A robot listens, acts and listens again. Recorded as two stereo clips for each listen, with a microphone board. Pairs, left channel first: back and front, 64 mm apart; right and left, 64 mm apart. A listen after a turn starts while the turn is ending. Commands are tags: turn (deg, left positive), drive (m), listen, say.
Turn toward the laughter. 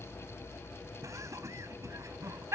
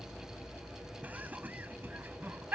<turn deg="35"/>
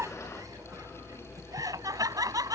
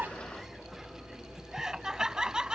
<turn deg="15"/>
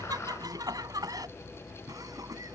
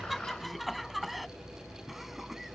<say>Facing the laughter.</say>